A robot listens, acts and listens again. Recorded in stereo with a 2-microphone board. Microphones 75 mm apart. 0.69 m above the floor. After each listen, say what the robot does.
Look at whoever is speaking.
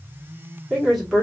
Turn 30° left.
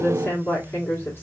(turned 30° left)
Turn 145° left.
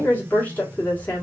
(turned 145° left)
Turn 25° left.
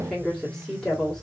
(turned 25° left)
Facing the woman speaking.